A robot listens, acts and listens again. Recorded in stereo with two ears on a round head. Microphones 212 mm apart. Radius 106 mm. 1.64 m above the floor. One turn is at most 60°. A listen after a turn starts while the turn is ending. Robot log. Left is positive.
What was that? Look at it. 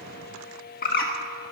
note: The bird: about 40° left or 140° left.
cmd yaw +40
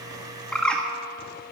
end: Facing the bird, 1 to 2 m away.